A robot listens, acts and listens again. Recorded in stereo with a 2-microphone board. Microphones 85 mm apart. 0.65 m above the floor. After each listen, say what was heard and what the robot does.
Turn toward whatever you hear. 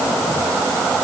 Keep listening.
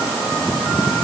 Keep listening.
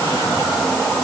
I can't make out anything.